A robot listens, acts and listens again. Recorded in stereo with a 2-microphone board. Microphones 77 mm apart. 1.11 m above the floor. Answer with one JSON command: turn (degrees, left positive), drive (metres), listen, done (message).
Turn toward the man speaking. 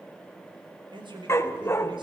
{"turn": -90}
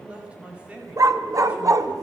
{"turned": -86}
{"turn": -15}
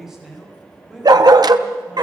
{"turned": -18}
{"done": "Found it: a man speaking, straight ahead."}